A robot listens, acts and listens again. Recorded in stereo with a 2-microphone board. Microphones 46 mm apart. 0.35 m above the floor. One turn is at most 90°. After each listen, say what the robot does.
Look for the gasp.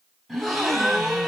Turn 30° right.
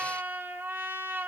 Keep listening.
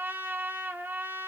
I heard a gasp, but can't make it out now. It was about 25° left or 145° right.